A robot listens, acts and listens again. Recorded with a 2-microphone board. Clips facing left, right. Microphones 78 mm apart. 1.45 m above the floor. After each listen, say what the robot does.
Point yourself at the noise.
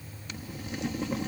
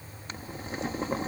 Turn 35° right.
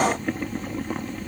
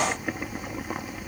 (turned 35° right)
Turn 10° right.
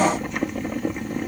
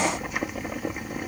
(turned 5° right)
Facing the boiling.